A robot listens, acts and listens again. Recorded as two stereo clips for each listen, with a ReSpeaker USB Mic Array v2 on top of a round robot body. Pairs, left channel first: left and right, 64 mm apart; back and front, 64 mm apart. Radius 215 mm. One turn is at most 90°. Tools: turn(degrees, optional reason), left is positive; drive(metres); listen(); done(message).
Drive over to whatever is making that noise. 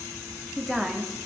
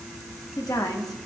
turn(degrees=90, reason="The woman speaking: straight behind.")
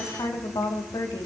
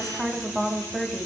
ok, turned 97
turn(degrees=85, reason="The woman speaking is now 85° left.")
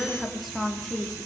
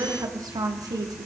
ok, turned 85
drive(metres=1.0)
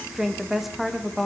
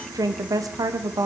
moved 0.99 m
drive(metres=1.0)
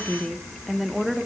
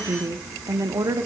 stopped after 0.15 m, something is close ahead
done("Arrived at the woman speaking, straight ahead.")